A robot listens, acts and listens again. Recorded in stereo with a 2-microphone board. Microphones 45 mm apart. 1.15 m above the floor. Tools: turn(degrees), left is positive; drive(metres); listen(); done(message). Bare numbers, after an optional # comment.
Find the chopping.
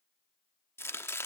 # The chopping: about 70° left or 110° left.
turn(70)
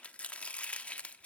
# So it is at 30° left.
turn(30)
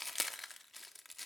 done("Found it: chopping, straight ahead.")